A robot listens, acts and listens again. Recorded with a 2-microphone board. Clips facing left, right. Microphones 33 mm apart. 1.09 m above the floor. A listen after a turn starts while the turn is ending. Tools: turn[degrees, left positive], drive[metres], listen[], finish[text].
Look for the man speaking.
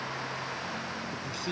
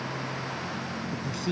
Action: turn[30]
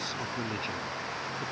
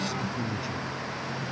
Thought: So it is at 140° left.
Action: turn[140]
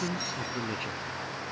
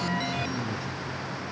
Thought: The man speaking is now 50° left.
Action: turn[50]
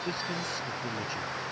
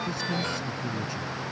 Action: listen[]
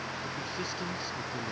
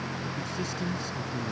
Thought: The man speaking is now 15° left.
Action: turn[15]
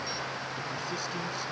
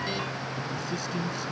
Action: finish[Facing the man speaking.]